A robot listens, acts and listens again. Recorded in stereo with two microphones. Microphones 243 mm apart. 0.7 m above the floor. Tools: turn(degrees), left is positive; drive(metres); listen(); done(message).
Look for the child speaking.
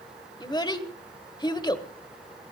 turn(degrees=20)
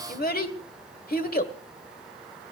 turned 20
turn(degrees=140)
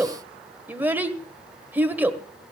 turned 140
turn(degrees=-10)
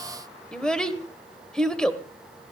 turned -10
done("Facing the child speaking.")